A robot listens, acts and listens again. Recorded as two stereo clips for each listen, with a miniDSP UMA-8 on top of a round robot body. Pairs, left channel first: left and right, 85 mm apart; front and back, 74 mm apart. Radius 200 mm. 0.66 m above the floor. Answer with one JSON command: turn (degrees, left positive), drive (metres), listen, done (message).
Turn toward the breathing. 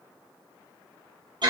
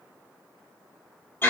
{"listen": true}
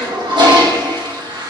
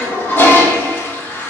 {"listen": true}
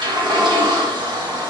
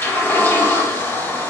{"done": "I can't make out breathing to turn to."}